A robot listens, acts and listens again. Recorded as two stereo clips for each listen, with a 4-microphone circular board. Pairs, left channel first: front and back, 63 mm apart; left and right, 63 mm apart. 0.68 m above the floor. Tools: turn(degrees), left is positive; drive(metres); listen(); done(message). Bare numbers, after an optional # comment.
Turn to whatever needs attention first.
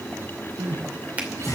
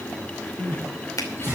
# The crying: 145° left.
turn(145)
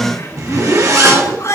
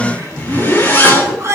# The crying is now 40° right.
turn(-40)
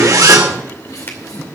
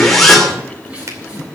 # The crying is now 15° right.
turn(-15)
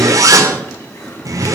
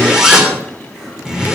listen()
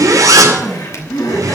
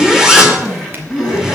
done("Found it: crying, straight ahead, over 4 m away.")